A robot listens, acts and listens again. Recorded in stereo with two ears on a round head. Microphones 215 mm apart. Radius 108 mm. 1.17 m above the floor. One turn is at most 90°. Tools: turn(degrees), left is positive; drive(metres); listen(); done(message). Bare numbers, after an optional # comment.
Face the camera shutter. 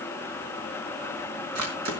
turn(-90)
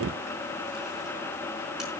listen()
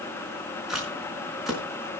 done("Facing the camera shutter.")